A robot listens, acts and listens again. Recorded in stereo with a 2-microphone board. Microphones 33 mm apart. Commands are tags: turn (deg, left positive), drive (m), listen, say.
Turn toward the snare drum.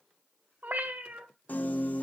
<listen/>
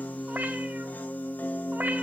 <listen/>
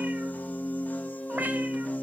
<say>I can't make out a snare drum, only a piano and a cat meowing.</say>